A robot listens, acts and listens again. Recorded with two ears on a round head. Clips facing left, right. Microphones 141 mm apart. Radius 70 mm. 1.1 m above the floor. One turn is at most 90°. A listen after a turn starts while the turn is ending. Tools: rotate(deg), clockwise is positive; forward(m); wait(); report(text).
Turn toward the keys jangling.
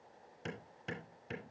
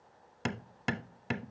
wait()
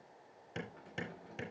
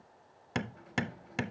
rotate(-90)
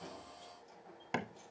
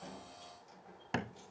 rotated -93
rotate(10)
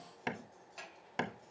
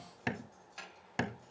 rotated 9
report("Found it: keys jangling, straight ahead, over 4 m away.")